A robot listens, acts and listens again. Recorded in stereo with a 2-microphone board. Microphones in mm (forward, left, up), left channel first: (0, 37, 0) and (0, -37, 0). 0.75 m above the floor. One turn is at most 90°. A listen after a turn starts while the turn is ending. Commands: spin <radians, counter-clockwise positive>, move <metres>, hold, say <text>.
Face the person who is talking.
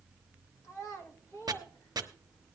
spin 0.79
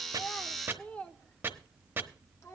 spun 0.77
spin 0.70
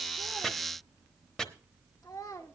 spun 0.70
spin 0.96
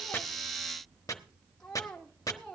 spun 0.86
spin 0.17
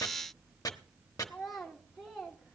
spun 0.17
say Found it: a child speaking, straight ahead, 1 to 2 m away.